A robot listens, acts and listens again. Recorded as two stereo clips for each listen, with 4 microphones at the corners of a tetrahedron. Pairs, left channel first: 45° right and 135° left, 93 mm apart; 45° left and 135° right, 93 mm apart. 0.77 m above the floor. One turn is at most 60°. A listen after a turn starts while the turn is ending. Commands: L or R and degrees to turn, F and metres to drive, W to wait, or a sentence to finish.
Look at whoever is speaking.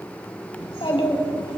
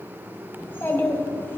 R20
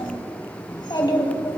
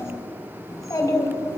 Found it: a child speaking, straight ahead, 2 to 4 m away.